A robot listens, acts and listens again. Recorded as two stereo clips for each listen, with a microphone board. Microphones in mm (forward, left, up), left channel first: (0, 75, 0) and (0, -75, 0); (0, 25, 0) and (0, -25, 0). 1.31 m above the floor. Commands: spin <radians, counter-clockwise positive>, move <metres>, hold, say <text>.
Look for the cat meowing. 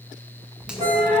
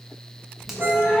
spin 0.52
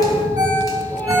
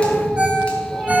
spin 0.26
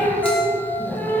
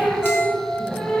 spin 0.26
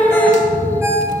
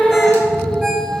spin 0.35
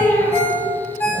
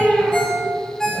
spin 0.26
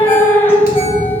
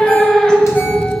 spin 0.26
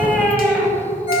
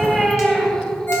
say Facing the cat meowing, 1 to 2 m away.